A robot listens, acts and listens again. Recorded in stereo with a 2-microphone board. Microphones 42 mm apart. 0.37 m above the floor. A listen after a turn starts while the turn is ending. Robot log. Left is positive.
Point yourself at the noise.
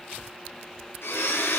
note: The blender: about 75° left or 105° left.
cmd yaw +75
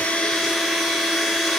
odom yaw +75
end: Facing the blender, over 4 m away.